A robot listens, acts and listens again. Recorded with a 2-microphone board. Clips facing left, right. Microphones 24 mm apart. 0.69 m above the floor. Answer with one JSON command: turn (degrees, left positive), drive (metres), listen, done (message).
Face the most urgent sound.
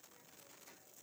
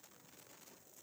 {"listen": true}
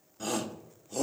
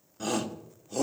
{"turn": -30}
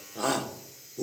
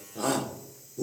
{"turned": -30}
{"turn": 15}
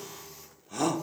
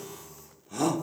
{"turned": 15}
{"done": "Facing the shout, 1 to 2 m away."}